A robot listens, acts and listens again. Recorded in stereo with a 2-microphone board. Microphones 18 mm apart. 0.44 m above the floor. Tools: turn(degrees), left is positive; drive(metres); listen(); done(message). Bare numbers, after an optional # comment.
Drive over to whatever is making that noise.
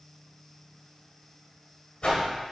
# The whoosh: about 60° left or 120° left.
turn(60)
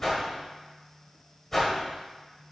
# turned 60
# So it is at 15° left.
turn(15)
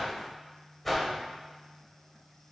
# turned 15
# The whoosh is now 10° left.
turn(10)
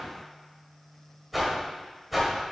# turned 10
drive(1.0)
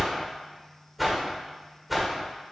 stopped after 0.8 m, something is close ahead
# The whoosh is now 10° right.
turn(-10)
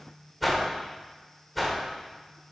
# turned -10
done("Arrived at the whoosh, straight ahead.")